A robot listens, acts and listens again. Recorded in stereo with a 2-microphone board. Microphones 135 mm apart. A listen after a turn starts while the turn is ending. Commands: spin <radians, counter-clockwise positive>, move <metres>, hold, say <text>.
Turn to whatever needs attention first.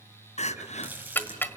spin 0.96
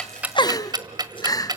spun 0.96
spin 0.61
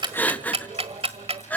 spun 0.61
spin 0.26
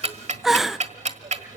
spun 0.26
say Found it: crying, straight ahead, under 1 m away.